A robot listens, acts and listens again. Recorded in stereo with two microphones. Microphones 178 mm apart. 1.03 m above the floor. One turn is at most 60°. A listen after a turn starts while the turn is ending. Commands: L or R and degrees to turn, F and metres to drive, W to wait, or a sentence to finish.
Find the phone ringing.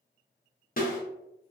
W
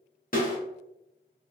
W
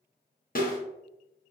I can't make out a phone ringing to turn to.